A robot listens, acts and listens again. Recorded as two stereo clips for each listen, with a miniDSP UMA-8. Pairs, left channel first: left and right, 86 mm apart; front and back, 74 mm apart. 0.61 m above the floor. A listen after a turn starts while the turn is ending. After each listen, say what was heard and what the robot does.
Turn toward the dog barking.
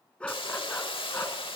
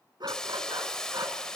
The dog barking: 150° left. Turn 150° left.
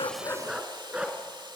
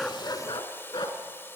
The dog barking is now 15° right. Turn 15° right.
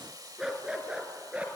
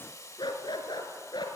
The dog barking is now 15° right. Turn 15° right.
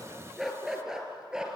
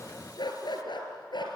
The dog barking is now 10° right. Turn 10° right.
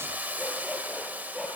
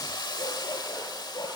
Facing the dog barking.